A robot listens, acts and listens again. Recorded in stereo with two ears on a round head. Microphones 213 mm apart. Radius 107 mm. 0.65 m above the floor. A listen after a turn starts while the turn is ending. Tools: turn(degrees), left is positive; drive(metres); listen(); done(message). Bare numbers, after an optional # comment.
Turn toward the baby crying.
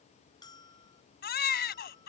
# The baby crying: about 40° left or 140° left.
turn(40)
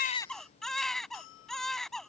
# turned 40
done("Facing the baby crying.")